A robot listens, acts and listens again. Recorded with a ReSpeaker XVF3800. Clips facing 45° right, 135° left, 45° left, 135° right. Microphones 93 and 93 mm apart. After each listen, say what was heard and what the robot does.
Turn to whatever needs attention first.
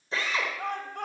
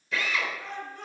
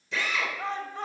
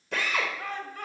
The shout: 20° right. Turn 20° right.
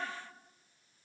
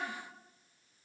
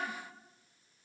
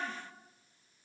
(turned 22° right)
Keep listening.
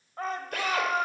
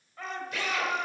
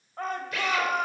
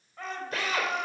Facing the shout, 2 to 4 m away.